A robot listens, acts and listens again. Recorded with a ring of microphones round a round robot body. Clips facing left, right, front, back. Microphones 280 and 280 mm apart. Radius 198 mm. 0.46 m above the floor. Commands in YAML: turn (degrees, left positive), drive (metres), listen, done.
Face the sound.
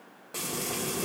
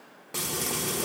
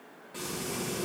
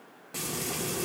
turn: -145
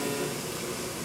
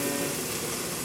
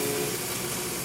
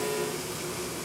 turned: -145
turn: -50
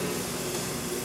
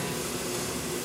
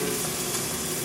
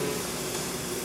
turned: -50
turn: -15
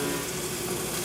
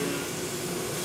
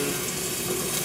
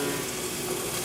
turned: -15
done: "Found it: frying, straight ahead."